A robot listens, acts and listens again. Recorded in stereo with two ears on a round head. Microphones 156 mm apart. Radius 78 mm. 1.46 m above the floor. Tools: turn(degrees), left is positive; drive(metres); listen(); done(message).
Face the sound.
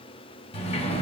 turn(degrees=35)
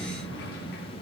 turn(degrees=115)
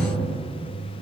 turn(degrees=40)
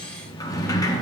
turn(degrees=20)
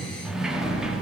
done("Found it: a sliding door, straight ahead.")